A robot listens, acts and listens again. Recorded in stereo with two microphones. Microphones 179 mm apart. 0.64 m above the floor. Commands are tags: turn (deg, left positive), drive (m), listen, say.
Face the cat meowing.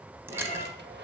<turn deg="-30"/>
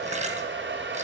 <listen/>
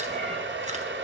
<listen/>
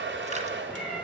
<say>Found it: a cat meowing, straight ahead, 2 to 4 m away.</say>